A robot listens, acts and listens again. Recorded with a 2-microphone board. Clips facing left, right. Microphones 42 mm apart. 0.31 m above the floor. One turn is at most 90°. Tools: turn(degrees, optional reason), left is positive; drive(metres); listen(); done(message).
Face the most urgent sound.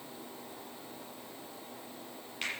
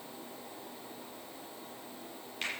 listen()
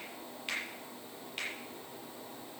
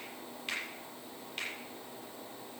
listen()
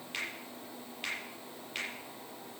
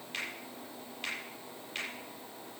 done("I can't make out anything urgent to turn to.")